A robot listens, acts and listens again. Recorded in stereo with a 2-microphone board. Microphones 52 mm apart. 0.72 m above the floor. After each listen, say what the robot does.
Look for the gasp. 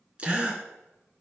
Turn 25° right.
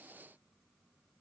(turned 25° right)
Keep listening.
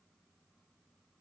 I heard a gasp, but can't make it out now. It was about straight ahead or 130° right.